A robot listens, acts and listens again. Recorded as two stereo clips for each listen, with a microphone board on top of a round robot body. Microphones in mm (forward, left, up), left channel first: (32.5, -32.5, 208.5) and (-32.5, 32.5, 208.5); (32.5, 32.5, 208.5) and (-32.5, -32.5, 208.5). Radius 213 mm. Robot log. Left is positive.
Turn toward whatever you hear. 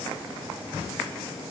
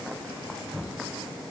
cmd idle
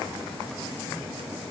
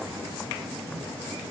cmd idle
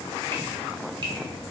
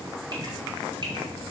note: The dripping: straight behind.
cmd yaw +180
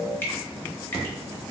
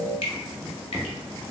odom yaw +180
note: The dripping is now 25° left.
cmd yaw +25
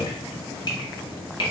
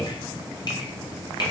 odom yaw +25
end: Found it: dripping, straight ahead.